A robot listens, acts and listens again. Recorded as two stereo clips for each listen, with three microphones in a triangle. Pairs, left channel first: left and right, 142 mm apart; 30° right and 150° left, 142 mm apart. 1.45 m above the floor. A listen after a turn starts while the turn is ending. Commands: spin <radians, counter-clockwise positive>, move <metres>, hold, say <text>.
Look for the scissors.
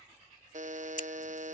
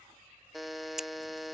spin 1.13
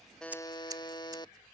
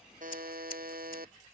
hold
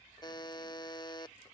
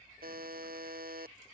hold
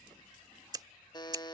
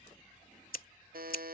spin -0.44
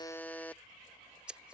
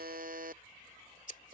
say Facing the scissors.